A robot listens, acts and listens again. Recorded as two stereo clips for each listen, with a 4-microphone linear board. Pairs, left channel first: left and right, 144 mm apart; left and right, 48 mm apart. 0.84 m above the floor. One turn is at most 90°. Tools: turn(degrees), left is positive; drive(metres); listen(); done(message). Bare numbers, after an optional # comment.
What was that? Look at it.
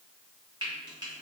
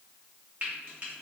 # The frying: about 30° right or 150° right.
turn(-30)
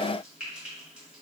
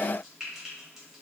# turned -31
# So it is at 10° right.
turn(-10)
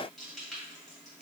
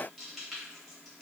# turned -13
done("Facing the frying, 1 to 2 m away.")